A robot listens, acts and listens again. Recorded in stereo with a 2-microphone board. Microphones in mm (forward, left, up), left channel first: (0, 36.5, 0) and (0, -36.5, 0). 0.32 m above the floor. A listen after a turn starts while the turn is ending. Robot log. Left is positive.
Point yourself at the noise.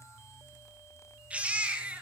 note: The baby crying: about 15° right or 165° right.
cmd yaw -15
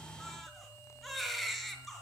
end: Found it: a baby crying, straight ahead, over 4 m away.